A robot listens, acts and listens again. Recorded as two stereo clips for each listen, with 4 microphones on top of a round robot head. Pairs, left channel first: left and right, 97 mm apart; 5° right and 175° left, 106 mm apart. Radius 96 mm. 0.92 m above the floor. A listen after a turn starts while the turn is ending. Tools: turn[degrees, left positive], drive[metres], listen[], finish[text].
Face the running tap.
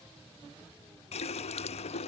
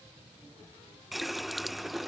Thought: The running tap: 85° left.
Action: turn[85]
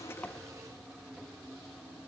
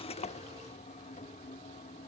Action: finish[Found it: a running tap, straight ahead.]